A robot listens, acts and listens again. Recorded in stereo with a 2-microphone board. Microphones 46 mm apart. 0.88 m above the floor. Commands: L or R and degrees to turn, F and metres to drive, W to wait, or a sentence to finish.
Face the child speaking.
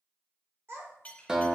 R65
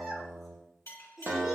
Facing the child speaking, 1 to 2 m away.